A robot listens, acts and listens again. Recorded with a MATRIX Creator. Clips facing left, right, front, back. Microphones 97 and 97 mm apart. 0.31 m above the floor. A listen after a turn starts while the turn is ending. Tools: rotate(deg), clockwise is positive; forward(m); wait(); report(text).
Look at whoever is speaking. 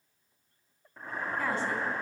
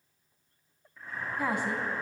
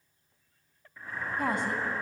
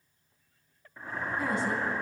rotate(15)
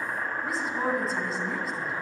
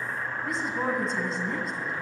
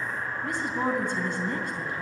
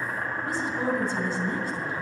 report("Found it: a woman speaking, straight ahead, 2 to 4 m away.")